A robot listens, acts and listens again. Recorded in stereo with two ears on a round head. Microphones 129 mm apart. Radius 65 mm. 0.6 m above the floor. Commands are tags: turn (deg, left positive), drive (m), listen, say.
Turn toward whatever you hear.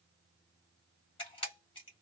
<turn deg="35"/>
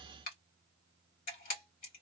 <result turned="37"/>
<turn deg="100"/>
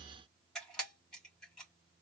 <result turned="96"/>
<say>Facing the camera shutter, 2 to 4 m away.</say>